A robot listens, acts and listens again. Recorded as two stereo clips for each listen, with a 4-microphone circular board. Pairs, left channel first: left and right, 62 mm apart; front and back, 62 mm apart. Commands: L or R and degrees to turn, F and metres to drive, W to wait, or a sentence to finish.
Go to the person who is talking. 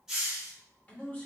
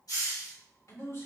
L25
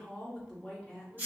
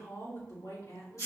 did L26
F1.0
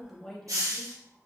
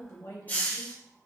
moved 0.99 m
F1.0
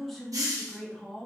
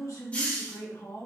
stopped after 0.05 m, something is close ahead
Arrived at the man speaking, straight ahead.